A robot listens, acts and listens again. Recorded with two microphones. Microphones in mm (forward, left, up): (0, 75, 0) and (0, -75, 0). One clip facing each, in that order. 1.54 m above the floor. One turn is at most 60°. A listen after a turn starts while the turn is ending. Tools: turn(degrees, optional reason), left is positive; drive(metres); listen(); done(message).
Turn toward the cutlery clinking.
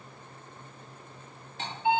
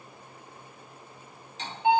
turn(degrees=55, reason="The cutlery clinking: about 55° left or 125° left.")
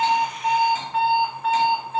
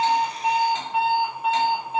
listen()
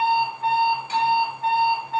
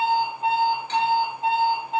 listen()
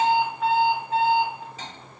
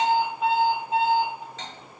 turn(degrees=10, reason="So it is at 10° left.")
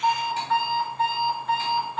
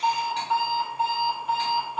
listen()
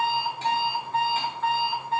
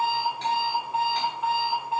listen()
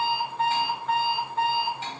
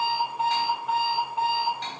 done("Facing the cutlery clinking.")